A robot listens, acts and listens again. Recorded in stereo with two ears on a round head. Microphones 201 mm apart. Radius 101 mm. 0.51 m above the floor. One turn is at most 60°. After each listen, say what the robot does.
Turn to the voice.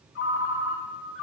Keep listening.
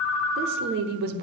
Turn 50° right.
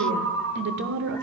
Turn 60° right.
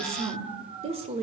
Turn 30° right.
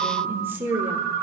Turn 10° right.
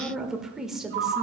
Found it: a woman speaking, straight ahead, 1 to 2 m away.